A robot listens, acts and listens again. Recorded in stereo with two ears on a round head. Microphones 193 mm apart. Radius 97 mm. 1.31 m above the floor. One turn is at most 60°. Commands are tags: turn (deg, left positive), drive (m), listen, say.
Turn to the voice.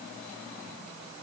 <listen/>
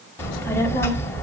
<turn deg="30"/>
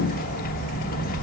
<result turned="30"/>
<turn deg="60"/>
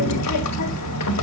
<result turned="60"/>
<turn deg="60"/>
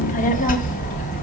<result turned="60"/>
<turn deg="35"/>
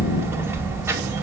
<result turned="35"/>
<turn deg="-10"/>
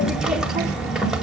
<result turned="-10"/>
<say>Found it: a child speaking, straight ahead.</say>